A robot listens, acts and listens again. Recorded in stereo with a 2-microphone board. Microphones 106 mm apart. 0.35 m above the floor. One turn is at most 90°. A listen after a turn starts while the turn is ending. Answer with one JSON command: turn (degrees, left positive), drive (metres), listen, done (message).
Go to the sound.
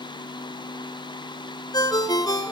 {"turn": 40}
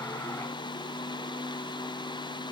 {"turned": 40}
{"listen": true}
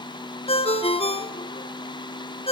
{"turn": 90}
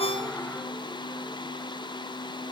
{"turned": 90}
{"turn": 15}
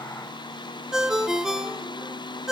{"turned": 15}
{"drive": 1.0}
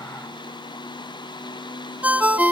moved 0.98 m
{"turn": -15}
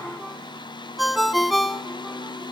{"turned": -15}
{"drive": 1.0}
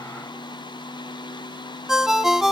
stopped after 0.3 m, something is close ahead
{"done": "I am next to the ringtone."}